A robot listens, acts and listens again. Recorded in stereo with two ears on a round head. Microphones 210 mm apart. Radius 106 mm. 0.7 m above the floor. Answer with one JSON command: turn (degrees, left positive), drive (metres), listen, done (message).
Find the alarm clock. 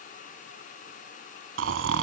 {"listen": true}
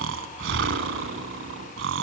{"listen": true}
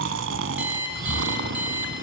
{"turn": -30}
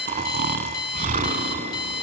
{"turn": 20}
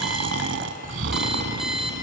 {"listen": true}
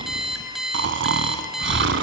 {"done": "Found it: an alarm clock, straight ahead, 2 to 4 m away."}